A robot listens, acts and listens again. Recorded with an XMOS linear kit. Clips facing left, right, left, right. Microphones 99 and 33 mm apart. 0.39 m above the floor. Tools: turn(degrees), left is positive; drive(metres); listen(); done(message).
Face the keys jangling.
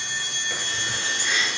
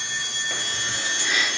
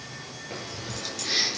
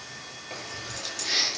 turn(degrees=30)
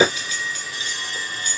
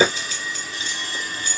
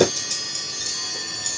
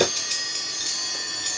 turn(degrees=-30)
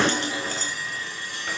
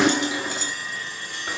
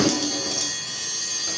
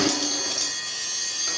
turn(degrees=-15)
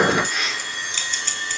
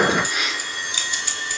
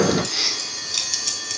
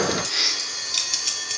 turn(degrees=-10)
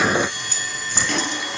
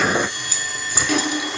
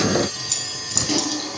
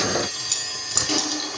done("Found it: keys jangling, straight ahead, 1 to 2 m away.")